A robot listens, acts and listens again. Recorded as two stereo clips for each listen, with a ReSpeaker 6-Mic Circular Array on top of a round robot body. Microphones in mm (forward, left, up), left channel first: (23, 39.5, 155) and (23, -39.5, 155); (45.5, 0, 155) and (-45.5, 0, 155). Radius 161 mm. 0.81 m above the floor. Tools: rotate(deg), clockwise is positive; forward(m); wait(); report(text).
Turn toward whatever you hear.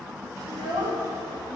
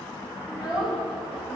rotate(95)
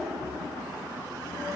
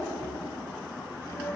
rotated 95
rotate(-35)
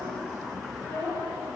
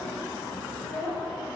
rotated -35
rotate(-30)
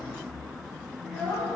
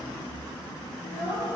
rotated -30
rotate(-10)
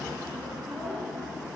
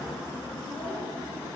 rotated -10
report("Found it: a child speaking, straight ahead.")